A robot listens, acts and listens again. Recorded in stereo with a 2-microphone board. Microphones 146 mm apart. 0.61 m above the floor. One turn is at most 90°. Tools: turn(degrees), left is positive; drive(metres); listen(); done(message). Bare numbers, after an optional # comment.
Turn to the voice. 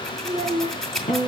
# The child speaking: about 55° right or 125° right.
turn(-55)
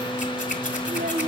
# So it is at 70° right.
turn(-70)
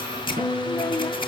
listen()
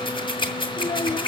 # The child speaking is now 20° left.
turn(20)
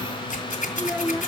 done("Found it: a child speaking, straight ahead, under 1 m away.")